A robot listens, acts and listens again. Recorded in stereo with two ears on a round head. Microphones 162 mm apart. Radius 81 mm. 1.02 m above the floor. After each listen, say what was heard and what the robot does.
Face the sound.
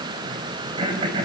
The throat clearing: about 30° right or 150° right. Turn 30° right.
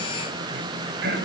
So it is at 120° right. Turn 120° right.
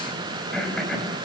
Facing the throat clearing, over 4 m away.